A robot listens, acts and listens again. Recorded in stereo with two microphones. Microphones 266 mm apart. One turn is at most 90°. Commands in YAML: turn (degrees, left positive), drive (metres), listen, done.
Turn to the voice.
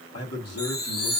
turn: 60
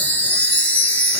listen: true
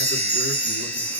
listen: true
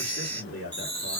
turn: 55
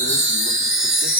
listen: true
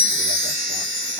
listen: true
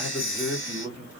done: "Facing the man speaking."